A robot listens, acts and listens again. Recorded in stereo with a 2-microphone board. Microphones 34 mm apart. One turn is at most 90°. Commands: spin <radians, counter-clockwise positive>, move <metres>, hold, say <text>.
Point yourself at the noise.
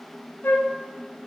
spin 1.57
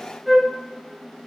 say Found it: a flute, straight ahead, under 1 m away.